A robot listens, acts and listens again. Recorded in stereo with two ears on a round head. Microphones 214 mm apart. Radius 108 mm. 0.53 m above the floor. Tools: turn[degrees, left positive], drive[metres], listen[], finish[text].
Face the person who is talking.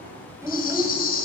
Action: turn[-30]
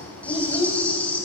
Thought: So it is at 20° left.
Action: turn[20]
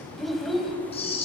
Action: finish[Facing the child speaking, 2 to 4 m away.]